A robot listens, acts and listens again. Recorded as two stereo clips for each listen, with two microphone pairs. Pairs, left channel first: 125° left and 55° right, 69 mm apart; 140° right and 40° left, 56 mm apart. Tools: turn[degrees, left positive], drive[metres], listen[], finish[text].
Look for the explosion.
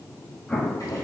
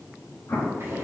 Thought: The explosion: 155° right.
Action: turn[-155]
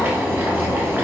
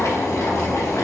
Action: finish[Facing where the explosion came from. I can't hear it now.]